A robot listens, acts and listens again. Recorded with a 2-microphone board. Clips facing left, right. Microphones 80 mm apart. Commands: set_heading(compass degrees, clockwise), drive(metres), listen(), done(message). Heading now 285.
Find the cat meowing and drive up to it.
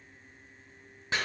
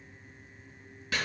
listen()
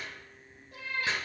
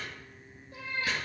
set_heading(215)
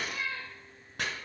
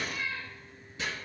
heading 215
set_heading(180)
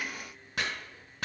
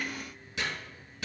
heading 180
listen()
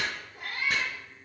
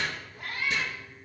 set_heading(165)
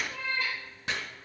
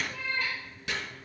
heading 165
drive(1.0)
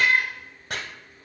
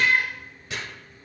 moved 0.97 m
drive(1.0)
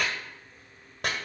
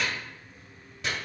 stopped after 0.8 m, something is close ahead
listen()
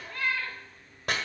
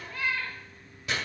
done("I am next to the cat meowing.")